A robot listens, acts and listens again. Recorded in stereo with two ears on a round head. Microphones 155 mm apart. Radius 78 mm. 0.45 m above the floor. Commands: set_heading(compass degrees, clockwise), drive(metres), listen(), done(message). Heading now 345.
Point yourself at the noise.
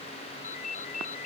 set_heading(295)
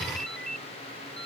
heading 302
done("Found it: a ringtone, straight ahead.")